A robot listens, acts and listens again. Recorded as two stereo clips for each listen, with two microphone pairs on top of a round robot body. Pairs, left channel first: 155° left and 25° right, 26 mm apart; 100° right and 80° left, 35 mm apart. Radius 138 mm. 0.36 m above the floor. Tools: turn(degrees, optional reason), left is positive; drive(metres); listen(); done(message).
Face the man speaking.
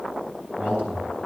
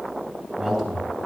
turn(degrees=180, reason="The man speaking: straight behind.")
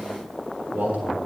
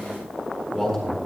turn(degrees=-15, reason="The man speaking is now 15° right.")
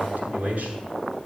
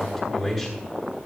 done("Facing the man speaking, over 4 m away.")